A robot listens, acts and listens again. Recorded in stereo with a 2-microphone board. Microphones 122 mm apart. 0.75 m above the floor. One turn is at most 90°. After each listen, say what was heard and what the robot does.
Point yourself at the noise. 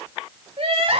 The crying: about 50° right or 130° right. Turn 50° right.
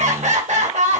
So it is at 80° right. Turn 80° right.
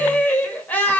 The crying is now 15° left. Turn 15° left.
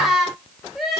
Facing the crying, 2 to 4 m away.